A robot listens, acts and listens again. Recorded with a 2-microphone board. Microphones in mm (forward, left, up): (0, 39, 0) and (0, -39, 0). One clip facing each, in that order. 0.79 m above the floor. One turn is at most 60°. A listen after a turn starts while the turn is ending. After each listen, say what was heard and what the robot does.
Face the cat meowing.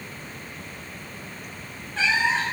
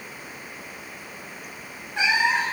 Turn 30° right.
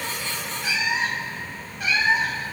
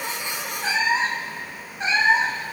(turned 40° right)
So it is at 150° right. Turn 60° right.
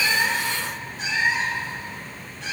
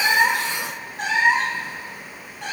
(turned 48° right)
The cat meowing is now 120° right. Turn 60° right.
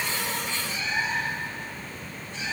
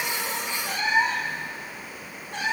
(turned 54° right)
The cat meowing is now 65° right. Turn 60° right.
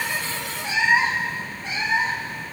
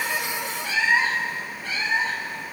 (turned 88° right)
The cat meowing is now 20° left. Turn 20° left.
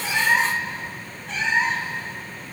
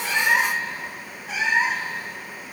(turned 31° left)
Facing the cat meowing.